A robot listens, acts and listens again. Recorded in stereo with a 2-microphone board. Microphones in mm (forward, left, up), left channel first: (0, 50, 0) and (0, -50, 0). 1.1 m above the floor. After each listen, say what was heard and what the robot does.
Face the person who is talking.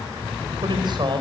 The man speaking: about 50° right or 130° right. Turn 50° right.
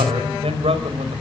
So it is at 85° right. Turn 85° right.
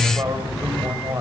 The man speaking is now 35° right. Turn 35° right.
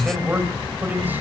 The man speaking is now 20° right. Turn 20° right.
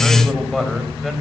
Facing the man speaking, over 4 m away.